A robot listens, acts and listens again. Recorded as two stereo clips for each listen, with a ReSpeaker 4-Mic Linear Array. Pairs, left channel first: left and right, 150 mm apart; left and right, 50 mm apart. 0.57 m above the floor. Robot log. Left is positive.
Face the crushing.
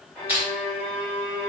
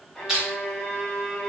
cmd yaw -30
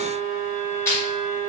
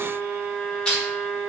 note: So it is at 15° left.
cmd yaw +15
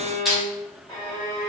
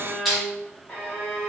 end: Found it: crushing, straight ahead, 1 to 2 m away.